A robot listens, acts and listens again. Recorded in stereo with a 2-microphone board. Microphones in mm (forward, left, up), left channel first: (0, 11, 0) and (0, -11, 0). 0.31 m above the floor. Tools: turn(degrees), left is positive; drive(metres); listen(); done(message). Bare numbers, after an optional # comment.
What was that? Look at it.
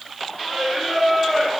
turn(30)
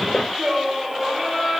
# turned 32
# So it is at 30° right.
turn(-30)
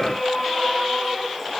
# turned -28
done("Facing the singing, over 4 m away.")